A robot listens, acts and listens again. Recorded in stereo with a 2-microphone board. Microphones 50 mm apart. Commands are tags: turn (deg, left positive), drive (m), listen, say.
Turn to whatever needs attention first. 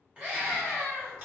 <turn deg="-25"/>
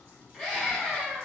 <say>Found it: a scream, straight ahead, 1 to 2 m away.</say>